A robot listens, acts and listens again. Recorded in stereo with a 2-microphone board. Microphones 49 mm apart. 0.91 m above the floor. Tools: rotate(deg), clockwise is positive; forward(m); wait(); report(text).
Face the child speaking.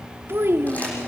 rotate(55)
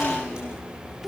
wait()
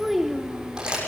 report("Facing the child speaking.")